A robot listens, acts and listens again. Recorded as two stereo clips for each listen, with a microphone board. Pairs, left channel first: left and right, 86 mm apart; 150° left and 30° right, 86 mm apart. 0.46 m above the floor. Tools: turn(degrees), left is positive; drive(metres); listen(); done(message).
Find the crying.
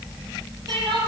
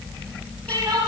turn(degrees=-70)
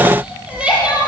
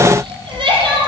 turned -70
turn(degrees=-15)
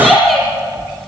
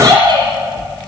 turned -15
done("Found it: crying, straight ahead.")